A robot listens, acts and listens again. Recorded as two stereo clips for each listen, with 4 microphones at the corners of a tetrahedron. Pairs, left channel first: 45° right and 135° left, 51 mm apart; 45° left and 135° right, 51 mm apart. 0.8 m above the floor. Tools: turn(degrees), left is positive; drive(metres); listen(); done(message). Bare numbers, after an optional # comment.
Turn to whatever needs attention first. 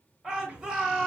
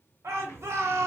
# The shout: 155° right.
turn(-155)
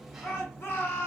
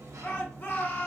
done("Facing the shout.")